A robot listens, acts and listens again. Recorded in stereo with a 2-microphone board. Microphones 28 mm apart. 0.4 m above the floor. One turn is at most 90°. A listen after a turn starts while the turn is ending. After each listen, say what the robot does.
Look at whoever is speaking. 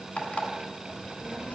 Turn 75° left.
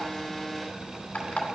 Facing the child speaking, 2 to 4 m away.